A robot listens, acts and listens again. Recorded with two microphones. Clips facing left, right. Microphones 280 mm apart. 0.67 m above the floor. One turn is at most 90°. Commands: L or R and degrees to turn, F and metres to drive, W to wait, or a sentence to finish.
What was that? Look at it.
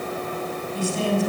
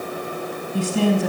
R90
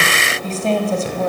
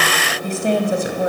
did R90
R15
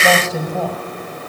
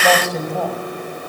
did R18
Facing the woman speaking.